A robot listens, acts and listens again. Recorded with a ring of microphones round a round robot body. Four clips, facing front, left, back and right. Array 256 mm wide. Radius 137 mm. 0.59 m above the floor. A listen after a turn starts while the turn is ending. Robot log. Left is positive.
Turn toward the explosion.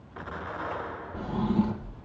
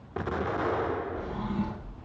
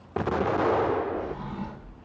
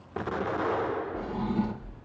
note: The explosion: straight behind.
cmd yaw +180
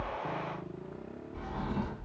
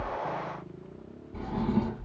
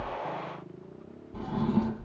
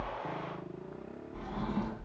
end: I heard an explosion from this way, but can't make it out now.